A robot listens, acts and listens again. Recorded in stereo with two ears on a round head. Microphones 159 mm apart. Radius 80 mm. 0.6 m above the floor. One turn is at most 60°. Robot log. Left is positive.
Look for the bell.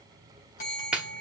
note: The bell: about 45° left or 135° left.
cmd yaw +45
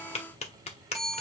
end: Facing the bell.